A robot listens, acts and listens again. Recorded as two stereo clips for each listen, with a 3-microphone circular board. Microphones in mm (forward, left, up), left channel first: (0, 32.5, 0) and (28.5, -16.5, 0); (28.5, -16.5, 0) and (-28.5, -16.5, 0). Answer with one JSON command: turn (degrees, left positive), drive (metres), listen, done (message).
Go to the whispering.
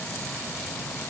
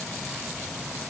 {"listen": true}
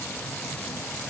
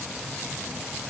{"listen": true}
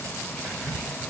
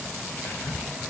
{"turn": -40}
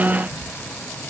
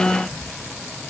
{"listen": true}
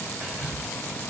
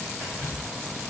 {"drive": 1.0}
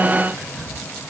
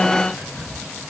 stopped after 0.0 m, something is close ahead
{"done": "Blocked. The whispering is further on, straight ahead."}